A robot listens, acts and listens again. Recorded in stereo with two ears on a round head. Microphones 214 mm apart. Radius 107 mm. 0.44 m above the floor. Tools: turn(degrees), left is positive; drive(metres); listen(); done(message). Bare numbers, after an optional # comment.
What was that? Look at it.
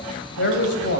# The man speaking: about 50° left or 130° left.
turn(50)
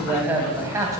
# So it is at 15° right.
turn(-15)
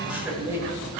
# The man speaking is now 10° right.
turn(-10)
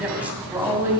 # The man speaking is now 10° right.
turn(-10)
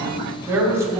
# The man speaking is now 10° right.
turn(-10)
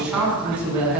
done("Facing the man speaking.")